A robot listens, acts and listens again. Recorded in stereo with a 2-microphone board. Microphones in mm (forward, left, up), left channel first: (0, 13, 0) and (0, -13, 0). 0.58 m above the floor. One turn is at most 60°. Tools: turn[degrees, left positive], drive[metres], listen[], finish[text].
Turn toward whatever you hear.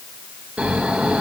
Thought: The snoring: about 55° right or 125° right.
Action: turn[-55]
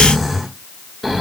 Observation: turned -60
Action: finish[Facing the snoring, 1 to 2 m away.]